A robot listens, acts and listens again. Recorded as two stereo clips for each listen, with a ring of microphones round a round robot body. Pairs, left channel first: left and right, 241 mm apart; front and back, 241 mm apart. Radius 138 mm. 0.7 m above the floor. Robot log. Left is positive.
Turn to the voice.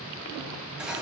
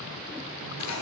cmd idle
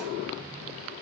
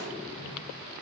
cmd idle
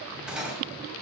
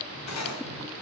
end: I can't make out anyone speaking to turn to.